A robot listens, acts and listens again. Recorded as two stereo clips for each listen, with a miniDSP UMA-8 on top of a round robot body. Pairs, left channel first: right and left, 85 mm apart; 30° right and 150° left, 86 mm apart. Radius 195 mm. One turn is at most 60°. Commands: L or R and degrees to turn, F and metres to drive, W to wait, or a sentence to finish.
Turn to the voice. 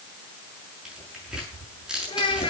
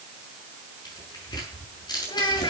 R60
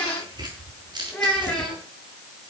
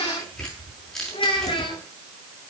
Found it: a child speaking, straight ahead, over 4 m away.